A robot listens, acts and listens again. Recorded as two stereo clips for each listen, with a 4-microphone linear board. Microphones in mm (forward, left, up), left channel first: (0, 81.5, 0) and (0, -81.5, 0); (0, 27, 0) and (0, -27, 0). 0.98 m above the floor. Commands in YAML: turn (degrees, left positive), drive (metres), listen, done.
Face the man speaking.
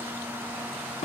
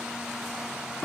listen: true
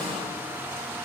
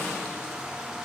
listen: true
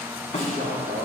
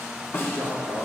turn: -50
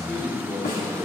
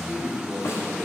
turn: 10
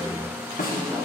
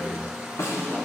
done: "Found it: a man speaking, straight ahead."